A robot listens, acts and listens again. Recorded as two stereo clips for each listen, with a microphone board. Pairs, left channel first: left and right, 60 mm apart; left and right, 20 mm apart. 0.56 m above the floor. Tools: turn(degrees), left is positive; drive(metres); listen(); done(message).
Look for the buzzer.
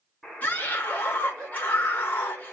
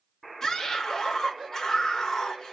turn(degrees=30)
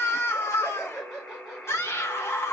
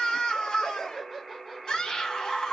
turn(degrees=150)
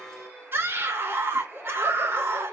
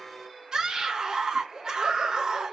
turn(degrees=-15)
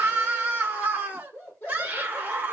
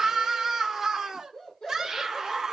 listen()
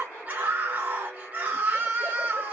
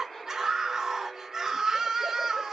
done("Facing the buzzer, 2 to 4 m away.")